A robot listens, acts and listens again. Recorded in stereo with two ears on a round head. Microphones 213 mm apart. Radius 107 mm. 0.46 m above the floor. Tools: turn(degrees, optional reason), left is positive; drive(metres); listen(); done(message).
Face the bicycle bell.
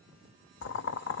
listen()
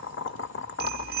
turn(degrees=-40, reason="The bicycle bell: about 40° right or 140° right.")
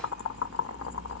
listen()
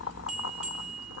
done("Facing the bicycle bell.")